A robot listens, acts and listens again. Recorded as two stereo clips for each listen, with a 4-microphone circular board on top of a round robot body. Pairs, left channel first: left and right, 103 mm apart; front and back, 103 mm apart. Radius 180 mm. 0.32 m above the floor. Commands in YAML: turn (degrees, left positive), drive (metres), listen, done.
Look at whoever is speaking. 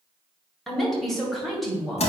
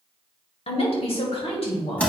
done: "Found it: a woman speaking, straight ahead."